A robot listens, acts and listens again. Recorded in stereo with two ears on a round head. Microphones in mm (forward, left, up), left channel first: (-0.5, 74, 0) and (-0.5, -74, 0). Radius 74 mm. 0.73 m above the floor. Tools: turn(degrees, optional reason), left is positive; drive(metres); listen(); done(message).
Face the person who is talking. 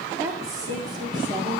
turn(degrees=-25, reason="The woman speaking: about 25° right or 155° right.")
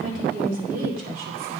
turn(degrees=-120, reason="So it is at 120° right.")
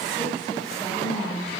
done("Found it: a woman speaking, straight ahead, 2 to 4 m away.")